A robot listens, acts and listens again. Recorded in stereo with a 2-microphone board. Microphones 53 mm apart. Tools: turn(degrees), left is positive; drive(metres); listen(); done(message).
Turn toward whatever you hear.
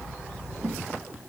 listen()
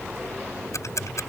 turn(degrees=75)
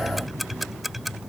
done("Facing the ticking.")